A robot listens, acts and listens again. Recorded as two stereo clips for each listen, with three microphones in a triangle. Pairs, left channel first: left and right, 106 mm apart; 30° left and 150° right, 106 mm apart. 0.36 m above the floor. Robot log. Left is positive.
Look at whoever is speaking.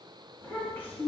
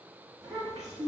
note: The child speaking: 160° left.
cmd yaw +160
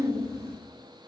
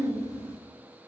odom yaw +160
note: The child speaking is now 25° right.
cmd yaw -25
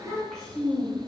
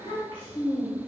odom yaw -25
end: Found it: a child speaking, straight ahead.